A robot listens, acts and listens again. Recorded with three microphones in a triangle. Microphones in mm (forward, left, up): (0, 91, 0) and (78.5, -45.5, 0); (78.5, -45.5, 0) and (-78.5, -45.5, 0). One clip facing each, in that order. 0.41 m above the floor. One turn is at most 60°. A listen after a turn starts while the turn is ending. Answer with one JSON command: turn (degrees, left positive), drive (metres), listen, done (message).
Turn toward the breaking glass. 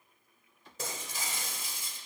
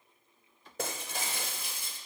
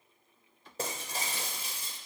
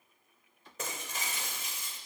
{"turn": -55}
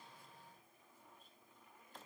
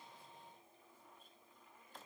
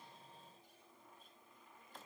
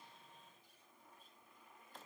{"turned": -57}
{"done": "Facing where the breaking glass came from. I can't hear it now."}